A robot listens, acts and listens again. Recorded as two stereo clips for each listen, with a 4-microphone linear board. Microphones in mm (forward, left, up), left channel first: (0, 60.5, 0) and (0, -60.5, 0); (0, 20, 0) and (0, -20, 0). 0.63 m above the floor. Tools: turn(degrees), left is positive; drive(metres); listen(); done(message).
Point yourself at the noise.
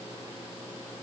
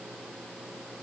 listen()
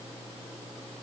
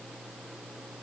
listen()
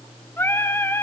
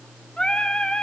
turn(degrees=20)
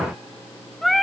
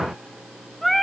done("Facing the singing, 1 to 2 m away.")